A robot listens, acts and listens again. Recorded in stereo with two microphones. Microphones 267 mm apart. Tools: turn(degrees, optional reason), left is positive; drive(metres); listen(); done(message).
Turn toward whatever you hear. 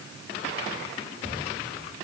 listen()
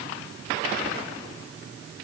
listen()
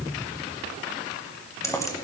turn(degrees=30)
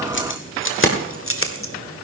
turn(degrees=130, reason="So it is at 130° left.")
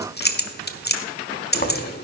turn(degrees=35, reason="The keys jangling is now 35° left.")
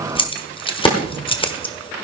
turn(degrees=20, reason="The keys jangling is now 20° left.")
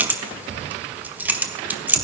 done("Found it: keys jangling, straight ahead.")